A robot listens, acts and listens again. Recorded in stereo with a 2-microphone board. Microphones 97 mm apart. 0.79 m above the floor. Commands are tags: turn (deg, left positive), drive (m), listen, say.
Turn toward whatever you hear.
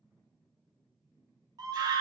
<turn deg="-40"/>
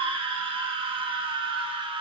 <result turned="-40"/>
<turn deg="-90"/>
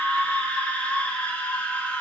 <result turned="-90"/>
<turn deg="15"/>
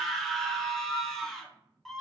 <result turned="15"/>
<say>Found it: a scream, straight ahead, under 1 m away.</say>